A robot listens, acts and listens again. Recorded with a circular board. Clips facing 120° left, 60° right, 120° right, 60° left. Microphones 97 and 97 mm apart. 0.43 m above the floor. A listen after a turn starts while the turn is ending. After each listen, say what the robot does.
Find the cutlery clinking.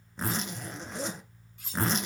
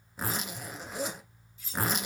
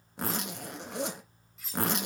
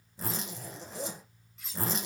Turn 150° left.
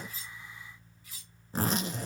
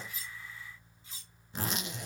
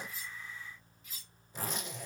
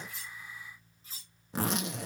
Facing the cutlery clinking.